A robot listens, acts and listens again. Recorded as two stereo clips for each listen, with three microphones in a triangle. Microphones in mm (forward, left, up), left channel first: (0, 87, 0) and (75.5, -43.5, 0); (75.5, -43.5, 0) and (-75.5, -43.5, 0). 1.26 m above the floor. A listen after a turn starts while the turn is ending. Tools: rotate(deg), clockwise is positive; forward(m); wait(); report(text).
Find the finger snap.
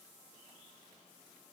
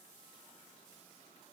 wait()
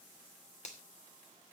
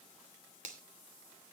rotate(-155)
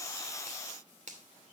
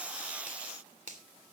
rotate(30)
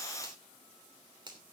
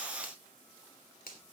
report("Found it: a finger snap, straight ahead, 2 to 4 m away.")